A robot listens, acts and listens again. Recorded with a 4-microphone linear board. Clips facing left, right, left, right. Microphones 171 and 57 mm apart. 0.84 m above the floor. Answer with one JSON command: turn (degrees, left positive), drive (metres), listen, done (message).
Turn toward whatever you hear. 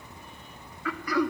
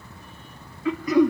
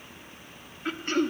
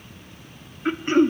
{"turn": -20}
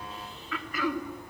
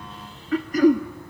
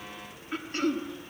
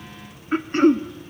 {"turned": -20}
{"turn": -140}
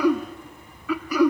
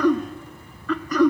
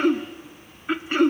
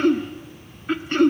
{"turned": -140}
{"turn": 10}
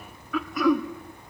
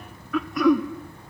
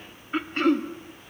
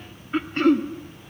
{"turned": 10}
{"done": "Found it: throat clearing, straight ahead."}